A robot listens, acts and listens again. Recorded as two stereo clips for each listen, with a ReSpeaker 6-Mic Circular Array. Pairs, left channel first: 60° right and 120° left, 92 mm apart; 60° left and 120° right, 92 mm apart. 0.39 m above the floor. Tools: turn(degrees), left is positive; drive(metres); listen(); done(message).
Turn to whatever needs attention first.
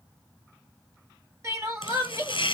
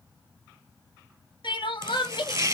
turn(degrees=65)
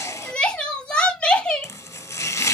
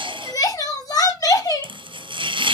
turn(degrees=20)
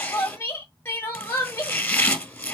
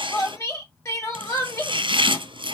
done("Found it: crying, straight ahead.")